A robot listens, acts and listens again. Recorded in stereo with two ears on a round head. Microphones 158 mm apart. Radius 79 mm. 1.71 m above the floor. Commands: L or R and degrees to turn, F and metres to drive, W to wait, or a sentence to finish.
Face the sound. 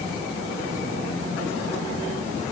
W
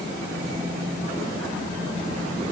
W
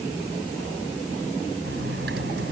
R65
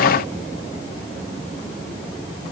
W
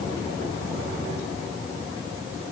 I heard a dropped coin, but can't make it out now. It was about straight ahead or 50° right.